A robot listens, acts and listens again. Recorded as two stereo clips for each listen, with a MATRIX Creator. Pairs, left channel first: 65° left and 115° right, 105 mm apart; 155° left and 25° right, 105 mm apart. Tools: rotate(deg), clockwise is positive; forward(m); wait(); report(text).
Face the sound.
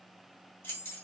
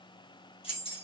rotate(-135)
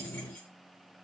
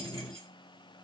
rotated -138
wait()
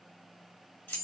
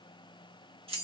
report("Found it: keys jangling, straight ahead, 1 to 2 m away.")